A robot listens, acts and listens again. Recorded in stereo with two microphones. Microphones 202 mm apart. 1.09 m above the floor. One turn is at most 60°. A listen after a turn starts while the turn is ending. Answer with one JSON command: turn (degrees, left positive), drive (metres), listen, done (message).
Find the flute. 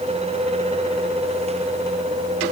{"listen": true}
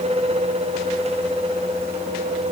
{"listen": true}
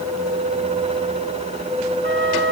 {"turn": -60}
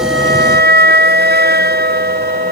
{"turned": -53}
{"turn": -55}
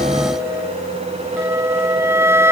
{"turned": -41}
{"turn": -10}
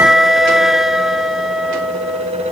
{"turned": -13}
{"done": "Facing the flute."}